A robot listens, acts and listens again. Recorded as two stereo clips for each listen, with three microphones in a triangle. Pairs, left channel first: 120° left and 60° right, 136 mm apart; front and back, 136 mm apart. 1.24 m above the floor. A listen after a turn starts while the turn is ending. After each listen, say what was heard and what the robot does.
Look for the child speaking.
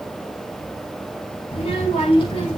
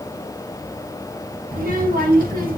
The child speaking: 170° left. Turn 170° left.
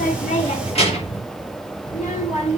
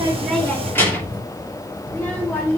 The child speaking is now 75° left. Turn 75° left.
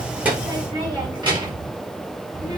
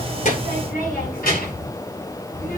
Facing the child speaking.